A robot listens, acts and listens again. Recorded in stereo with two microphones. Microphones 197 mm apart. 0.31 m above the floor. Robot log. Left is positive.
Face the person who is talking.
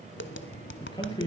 note: The man speaking: about 25° left or 155° left.
cmd yaw +25
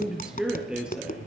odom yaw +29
end: Found it: a man speaking, straight ahead, over 4 m away.